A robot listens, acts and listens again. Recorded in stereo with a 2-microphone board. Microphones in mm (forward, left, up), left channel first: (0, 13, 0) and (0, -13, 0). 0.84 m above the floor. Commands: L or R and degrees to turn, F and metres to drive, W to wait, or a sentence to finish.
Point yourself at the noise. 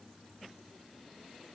W
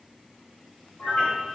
L50
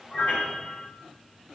L80
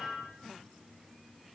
L25
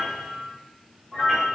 Facing the piano, 1 to 2 m away.